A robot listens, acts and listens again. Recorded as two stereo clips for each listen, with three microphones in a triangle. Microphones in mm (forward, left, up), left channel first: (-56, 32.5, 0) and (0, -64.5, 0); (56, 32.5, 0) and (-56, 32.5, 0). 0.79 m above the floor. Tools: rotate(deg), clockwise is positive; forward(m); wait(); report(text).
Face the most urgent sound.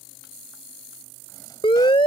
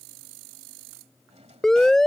rotate(-85)
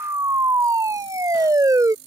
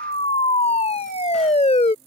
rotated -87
report("Found it: a siren, straight ahead.")